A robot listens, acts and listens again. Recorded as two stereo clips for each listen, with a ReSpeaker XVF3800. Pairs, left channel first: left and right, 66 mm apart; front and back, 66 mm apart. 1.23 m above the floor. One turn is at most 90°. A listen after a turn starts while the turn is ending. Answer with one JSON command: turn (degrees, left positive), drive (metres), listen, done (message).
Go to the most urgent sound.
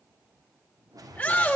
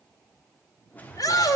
{"turn": 20}
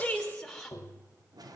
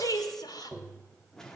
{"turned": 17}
{"listen": true}
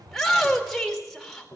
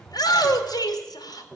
{"drive": 1.0}
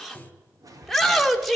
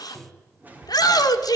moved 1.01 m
{"drive": 1.0}
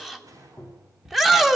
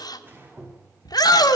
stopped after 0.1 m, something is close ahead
{"done": "I am next to the shout."}